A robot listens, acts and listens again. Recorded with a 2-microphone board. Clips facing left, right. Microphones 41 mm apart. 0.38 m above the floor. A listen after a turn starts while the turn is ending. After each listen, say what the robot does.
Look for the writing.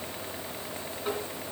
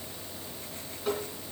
Keep listening.
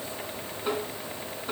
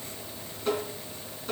Keep listening.
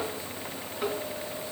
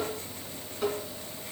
I can't make out writing, only tapping.